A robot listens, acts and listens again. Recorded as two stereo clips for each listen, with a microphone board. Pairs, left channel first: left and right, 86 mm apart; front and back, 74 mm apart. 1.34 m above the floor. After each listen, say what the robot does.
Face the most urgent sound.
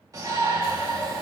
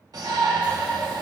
Turn 140° right.
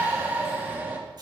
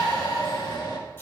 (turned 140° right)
Turn 20° right.
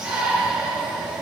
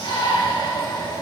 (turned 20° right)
Turn 10° right.
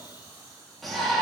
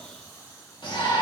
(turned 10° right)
Facing the shout.